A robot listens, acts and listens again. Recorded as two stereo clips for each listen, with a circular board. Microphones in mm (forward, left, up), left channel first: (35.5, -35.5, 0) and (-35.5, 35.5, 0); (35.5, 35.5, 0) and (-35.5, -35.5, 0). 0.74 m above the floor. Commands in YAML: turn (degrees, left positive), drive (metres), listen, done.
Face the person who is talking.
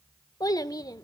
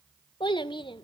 done: "Found it: a child speaking, straight ahead."